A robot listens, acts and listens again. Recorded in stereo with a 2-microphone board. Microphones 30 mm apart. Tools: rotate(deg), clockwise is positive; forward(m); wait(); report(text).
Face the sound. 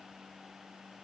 wait()
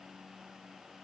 wait()
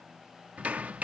rotate(55)
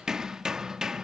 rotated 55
rotate(25)
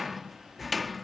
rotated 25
report("Found it: hammering, straight ahead.")